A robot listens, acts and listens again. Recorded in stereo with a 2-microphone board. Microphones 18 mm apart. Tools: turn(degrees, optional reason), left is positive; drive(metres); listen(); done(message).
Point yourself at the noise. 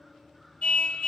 turn(degrees=90)
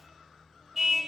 done("Found it: a car horn, straight ahead.")